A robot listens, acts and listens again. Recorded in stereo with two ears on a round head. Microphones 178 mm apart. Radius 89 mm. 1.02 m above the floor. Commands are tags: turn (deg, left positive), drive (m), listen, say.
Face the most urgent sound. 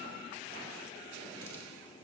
<listen/>
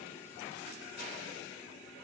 <listen/>
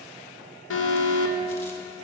<turn deg="70"/>
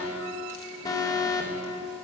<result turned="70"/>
<turn deg="20"/>
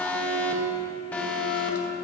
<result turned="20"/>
<turn deg="10"/>
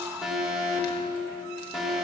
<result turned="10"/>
<say>Facing the alarm.</say>